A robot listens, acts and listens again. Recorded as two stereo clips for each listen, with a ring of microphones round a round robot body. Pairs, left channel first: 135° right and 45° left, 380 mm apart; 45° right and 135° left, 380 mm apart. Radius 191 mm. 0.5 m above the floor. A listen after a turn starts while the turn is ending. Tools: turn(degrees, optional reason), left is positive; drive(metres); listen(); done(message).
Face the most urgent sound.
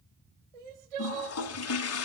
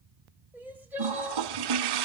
turn(degrees=50, reason="The crying: 50° left.")
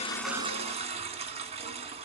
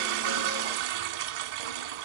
listen()
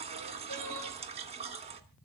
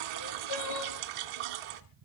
done("Facing the crying.")